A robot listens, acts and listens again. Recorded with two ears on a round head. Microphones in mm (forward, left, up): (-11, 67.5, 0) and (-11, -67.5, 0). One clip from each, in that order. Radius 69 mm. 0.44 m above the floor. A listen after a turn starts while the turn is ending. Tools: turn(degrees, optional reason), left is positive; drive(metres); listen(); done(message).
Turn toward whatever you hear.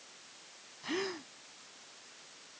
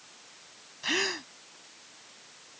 turn(degrees=-65, reason="The gasp: about 65° right or 115° right.")
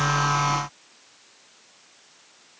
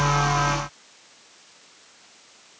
listen()
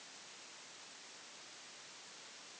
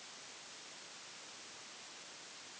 done("I heard a gasp, but can't make it out now. It was about straight ahead or 50° right.")